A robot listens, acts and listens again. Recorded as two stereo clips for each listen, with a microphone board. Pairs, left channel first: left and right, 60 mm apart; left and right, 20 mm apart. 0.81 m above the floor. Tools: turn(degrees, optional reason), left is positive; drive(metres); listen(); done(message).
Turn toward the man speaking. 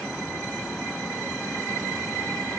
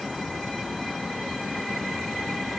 listen()
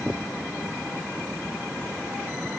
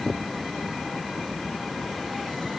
listen()
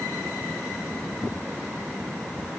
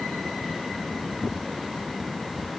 done("I can't make out a man speaking.")